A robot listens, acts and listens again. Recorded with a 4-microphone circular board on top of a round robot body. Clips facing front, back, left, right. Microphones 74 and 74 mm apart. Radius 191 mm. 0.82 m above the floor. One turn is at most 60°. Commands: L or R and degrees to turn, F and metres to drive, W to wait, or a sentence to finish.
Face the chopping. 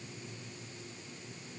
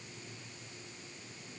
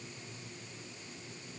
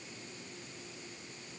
W
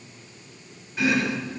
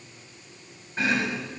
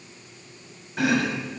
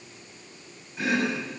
L60
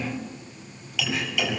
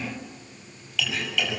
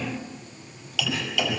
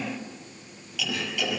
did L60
L60
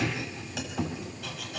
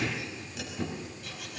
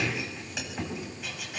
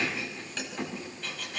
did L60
L10
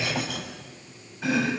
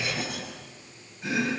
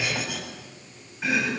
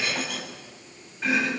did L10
Found it: chopping, straight ahead.